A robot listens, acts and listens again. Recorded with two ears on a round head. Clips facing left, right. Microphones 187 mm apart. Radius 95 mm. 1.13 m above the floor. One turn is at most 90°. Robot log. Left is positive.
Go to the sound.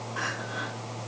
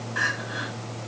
note: The crying: about 20° right or 160° right.
cmd yaw -20
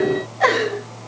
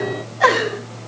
cmd fwd 1.0
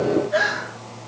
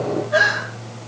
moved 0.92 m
cmd fwd 1.0
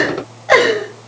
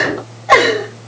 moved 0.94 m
cmd fwd 1.0
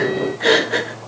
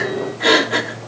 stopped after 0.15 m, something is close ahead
end: Arrived at the crying, straight ahead.